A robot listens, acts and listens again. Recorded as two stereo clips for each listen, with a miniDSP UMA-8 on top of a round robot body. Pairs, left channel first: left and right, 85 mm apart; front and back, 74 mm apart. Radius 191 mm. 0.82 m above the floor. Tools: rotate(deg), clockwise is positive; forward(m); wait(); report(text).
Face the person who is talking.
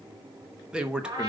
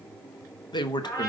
rotate(10)
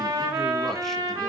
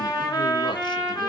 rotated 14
wait()
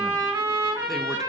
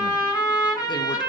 wait()
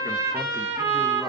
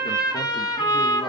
report("I heard a man speaking from this way, but can't make it out now.")